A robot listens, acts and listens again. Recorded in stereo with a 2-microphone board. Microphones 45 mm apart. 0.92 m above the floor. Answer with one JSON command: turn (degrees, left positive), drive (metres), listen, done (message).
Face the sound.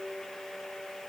{"listen": true}
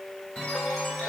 {"turn": 25}
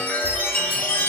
{"turn": 130}
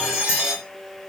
{"turn": -30}
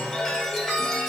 {"done": "Found it: a chime, straight ahead."}